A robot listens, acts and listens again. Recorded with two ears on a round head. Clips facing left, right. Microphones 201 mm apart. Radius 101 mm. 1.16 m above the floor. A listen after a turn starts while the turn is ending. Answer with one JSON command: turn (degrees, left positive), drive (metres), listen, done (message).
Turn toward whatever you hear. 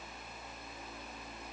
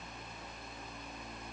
{"listen": true}
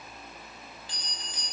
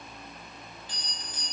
{"turn": 70}
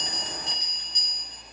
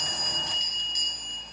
{"turn": 40}
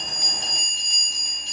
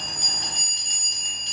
{"turn": -15}
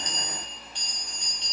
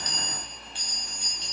{"done": "Found it: a bell, straight ahead."}